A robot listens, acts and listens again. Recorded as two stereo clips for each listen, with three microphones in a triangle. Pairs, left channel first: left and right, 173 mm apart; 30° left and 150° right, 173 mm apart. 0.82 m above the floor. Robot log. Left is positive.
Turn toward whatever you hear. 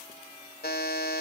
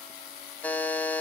note: The buzzer: 110° left.
cmd yaw +110
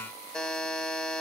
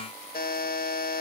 end: Found it: a buzzer, straight ahead.